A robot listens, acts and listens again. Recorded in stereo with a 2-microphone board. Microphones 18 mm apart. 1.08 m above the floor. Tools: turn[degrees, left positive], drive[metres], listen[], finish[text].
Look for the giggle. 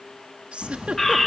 Thought: The giggle: about 75° right or 105° right.
Action: turn[-75]
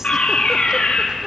Action: listen[]
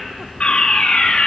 Action: listen[]
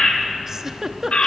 Thought: So it is at 30° right.
Action: turn[-30]
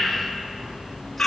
Action: listen[]
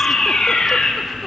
Action: listen[]
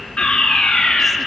Action: finish[Facing where the giggle came from. I can't hear it now.]